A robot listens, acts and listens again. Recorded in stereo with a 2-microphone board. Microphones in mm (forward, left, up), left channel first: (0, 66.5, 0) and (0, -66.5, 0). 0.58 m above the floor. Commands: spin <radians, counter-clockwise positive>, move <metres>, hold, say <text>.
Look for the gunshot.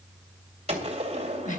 spin -0.87
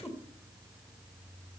hold
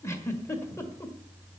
say I heard a gunshot, but can't make it out now. It was about straight ahead or 80° right.